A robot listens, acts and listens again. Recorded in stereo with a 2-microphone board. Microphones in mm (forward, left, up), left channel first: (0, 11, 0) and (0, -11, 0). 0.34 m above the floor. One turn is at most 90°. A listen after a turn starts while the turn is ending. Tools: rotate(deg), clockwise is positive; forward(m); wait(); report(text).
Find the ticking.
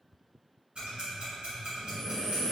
rotate(55)
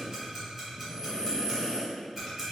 report("Facing the ticking, 1 to 2 m away.")